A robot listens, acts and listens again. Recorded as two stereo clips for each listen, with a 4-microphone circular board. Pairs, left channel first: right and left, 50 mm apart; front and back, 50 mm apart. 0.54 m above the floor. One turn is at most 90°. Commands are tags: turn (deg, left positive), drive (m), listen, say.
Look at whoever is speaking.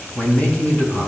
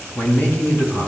<turn deg="-35"/>
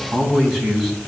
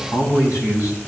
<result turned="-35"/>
<say>Found it: a man speaking, straight ahead.</say>